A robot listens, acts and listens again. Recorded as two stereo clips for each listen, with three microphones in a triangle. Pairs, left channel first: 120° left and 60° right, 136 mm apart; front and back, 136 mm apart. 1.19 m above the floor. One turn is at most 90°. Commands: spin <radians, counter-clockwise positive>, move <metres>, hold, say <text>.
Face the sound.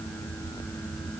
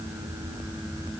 hold
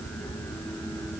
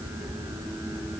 hold
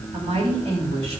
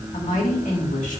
spin -0.35
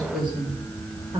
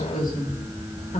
spin -0.17
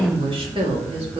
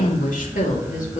spin -0.26
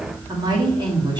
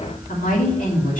say Facing the woman speaking.